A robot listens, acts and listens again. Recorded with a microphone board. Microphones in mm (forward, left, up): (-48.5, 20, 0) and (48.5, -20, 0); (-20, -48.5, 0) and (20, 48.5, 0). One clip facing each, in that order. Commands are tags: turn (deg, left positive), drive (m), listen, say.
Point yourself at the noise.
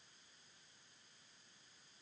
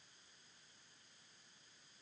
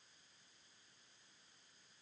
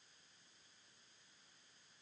<listen/>
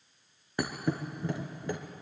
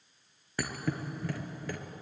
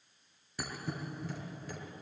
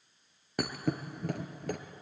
<turn deg="90"/>
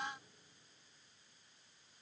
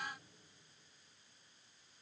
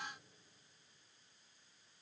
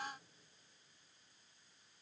<say>I heard a thud from this way, but can't make it out now.</say>